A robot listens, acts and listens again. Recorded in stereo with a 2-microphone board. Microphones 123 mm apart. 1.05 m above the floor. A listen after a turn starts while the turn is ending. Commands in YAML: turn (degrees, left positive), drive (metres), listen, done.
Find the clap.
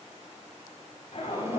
listen: true
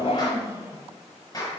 turn: 30
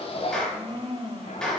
done: "Facing the clap."